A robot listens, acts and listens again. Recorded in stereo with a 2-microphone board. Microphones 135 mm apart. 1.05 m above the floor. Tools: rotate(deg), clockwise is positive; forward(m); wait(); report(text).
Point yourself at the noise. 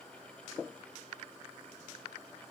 wait()
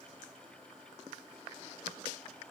wait()
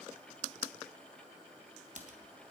rotate(70)
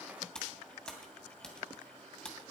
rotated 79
report("Found it: typing on a keyboard, straight ahead, 2 to 4 m away.")